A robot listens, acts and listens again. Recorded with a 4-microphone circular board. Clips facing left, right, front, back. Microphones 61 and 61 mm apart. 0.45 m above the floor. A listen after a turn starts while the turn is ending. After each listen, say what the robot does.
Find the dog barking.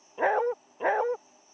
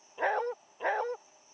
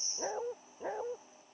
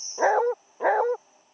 Turn 170° left.
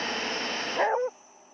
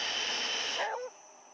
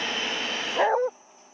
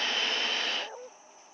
Turn 30° left.
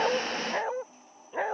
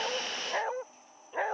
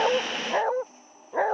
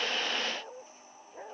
Found it: a dog barking, straight ahead.